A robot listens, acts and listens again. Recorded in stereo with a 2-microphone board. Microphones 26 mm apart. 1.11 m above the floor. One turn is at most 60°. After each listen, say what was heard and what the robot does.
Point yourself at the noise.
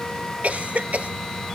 Turn 60° right.
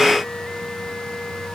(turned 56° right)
Nothing new. It was at 35° right. Turn 35° right.
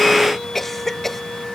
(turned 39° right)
The cough is now 15° left. Turn 15° left.
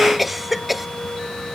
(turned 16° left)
Facing the cough.